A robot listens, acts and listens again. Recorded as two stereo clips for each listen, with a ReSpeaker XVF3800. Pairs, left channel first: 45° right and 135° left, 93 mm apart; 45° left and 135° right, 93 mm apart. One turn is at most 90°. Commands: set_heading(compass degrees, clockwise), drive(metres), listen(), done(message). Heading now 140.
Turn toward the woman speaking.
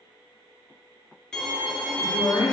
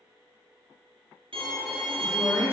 set_heading(155)
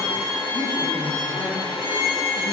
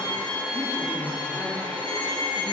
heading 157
set_heading(177)
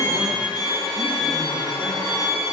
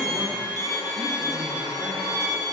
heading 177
listen()
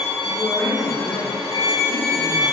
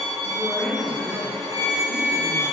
set_heading(212)
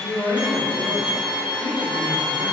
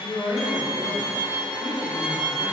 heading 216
done("Found it: a woman speaking, straight ahead, 2 to 4 m away.")